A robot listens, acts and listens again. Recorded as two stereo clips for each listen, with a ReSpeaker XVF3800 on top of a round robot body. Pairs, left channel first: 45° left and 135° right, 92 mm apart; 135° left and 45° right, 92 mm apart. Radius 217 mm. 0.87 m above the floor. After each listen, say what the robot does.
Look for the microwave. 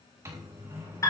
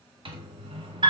Turn 75° right.
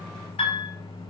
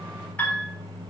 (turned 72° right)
Facing the microwave.